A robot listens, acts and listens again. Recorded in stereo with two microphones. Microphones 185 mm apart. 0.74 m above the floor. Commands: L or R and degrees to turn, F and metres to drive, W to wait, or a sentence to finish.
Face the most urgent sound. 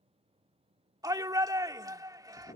R20
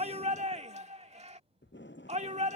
R140
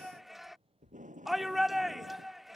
Found it: a shout, straight ahead.